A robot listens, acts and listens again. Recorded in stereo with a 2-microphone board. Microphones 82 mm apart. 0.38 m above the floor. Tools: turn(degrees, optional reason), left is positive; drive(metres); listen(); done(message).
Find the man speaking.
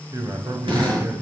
turn(degrees=-45, reason="The man speaking: about 45° right or 135° right.")
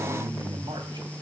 turn(degrees=-85, reason="So it is at 85° right.")
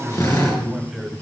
done("Found it: a man speaking, straight ahead.")